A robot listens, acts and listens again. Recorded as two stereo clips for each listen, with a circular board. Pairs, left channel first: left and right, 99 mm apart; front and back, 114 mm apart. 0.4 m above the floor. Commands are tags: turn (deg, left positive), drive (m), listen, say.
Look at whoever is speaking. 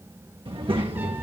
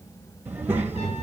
<turn deg="-110"/>
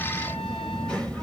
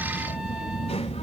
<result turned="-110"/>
<turn deg="10"/>
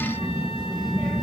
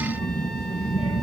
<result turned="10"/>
<say>Facing the child speaking.</say>